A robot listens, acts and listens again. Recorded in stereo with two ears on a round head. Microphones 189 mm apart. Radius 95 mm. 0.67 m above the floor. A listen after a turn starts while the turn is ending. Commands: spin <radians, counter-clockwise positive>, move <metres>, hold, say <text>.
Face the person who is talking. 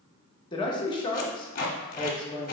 spin 0.44
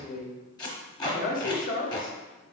spin 2.27
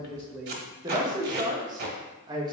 spin -0.44
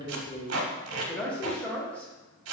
say Found it: a man speaking, straight ahead, under 1 m away.